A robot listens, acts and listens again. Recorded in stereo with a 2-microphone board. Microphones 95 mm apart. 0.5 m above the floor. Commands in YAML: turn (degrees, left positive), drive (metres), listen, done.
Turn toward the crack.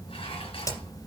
turn: 40
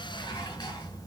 listen: true
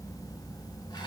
done: "I heard a crack, but can't make it out now. It was about straight ahead or 100° left."